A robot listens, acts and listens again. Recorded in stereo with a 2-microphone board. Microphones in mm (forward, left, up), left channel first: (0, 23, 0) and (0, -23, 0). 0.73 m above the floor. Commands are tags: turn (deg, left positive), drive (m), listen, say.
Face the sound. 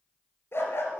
<turn deg="60"/>
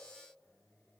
<listen/>
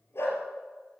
<turn deg="60"/>
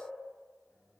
<listen/>
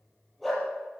<say>Facing the dog barking, over 4 m away.</say>